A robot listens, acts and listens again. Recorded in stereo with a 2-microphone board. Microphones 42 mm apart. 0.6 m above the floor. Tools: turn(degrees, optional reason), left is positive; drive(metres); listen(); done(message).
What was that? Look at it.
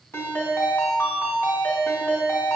turn(degrees=90)
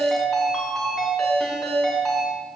done("Facing the ringtone.")